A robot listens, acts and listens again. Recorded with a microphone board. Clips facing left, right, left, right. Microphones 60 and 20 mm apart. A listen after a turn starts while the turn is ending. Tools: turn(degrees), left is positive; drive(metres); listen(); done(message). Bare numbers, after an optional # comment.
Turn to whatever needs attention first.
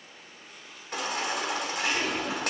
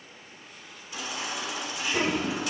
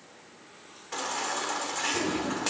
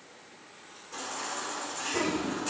# The baby crying: about 60° left or 120° left.
turn(60)
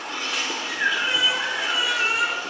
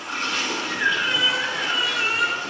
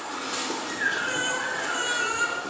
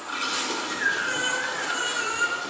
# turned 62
done("Facing the baby crying, 1 to 2 m away.")